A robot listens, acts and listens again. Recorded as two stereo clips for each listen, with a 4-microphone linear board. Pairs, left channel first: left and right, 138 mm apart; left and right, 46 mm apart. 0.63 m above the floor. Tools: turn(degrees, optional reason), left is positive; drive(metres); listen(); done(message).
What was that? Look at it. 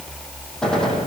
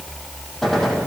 turn(degrees=30)
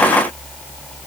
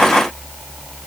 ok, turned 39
listen()
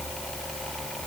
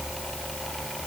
done("I heard a gunshot, but can't make it out now. It was about 35° right or 135° left.")